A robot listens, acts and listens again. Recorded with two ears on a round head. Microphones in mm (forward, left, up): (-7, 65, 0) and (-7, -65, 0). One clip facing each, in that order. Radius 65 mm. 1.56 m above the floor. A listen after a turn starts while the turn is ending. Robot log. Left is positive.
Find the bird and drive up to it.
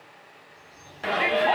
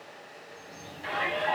note: The bird: about 60° right or 120° right.
cmd yaw -60
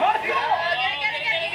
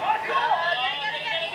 cmd idle
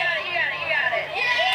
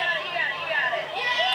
cmd idle
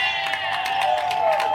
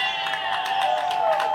end: I heard a bird, but can't make it out now. It was about straight ahead or 60° right. I did not reach it.